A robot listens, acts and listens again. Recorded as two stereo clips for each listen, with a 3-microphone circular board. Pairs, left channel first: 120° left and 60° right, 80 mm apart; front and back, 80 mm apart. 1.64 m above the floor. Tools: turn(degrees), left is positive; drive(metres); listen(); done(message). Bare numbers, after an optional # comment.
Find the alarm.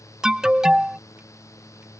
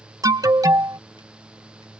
# The alarm: 140° right.
turn(-140)
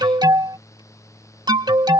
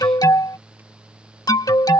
# The alarm is now 35° right.
turn(-35)
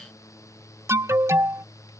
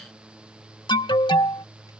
# The alarm is now 10° right.
turn(-10)
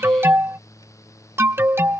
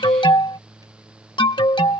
done("Found it: an alarm, straight ahead.")